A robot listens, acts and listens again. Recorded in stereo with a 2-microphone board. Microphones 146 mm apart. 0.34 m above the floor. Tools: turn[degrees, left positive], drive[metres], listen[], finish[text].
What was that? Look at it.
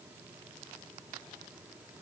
Action: listen[]
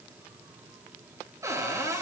Thought: The cupboard door: about 20° right or 160° right.
Action: turn[-20]
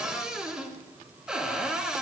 Action: finish[Facing the cupboard door, 2 to 4 m away.]